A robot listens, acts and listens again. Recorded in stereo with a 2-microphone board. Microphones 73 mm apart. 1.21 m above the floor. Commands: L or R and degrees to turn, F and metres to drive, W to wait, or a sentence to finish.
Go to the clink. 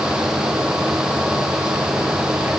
W
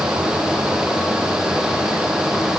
W
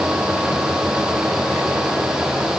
I can't make out a clink.